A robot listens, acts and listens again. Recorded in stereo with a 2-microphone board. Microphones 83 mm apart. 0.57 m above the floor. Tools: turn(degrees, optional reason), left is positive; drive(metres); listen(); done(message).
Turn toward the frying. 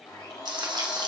turn(degrees=-60, reason="The frying: about 60° right or 120° right.")
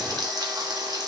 turn(degrees=-55, reason="So it is at 55° right.")
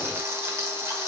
turn(degrees=-35, reason="The frying is now 35° right.")
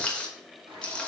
turn(degrees=15, reason="The frying is now 15° left.")
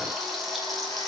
done("Found it: frying, straight ahead, 1 to 2 m away.")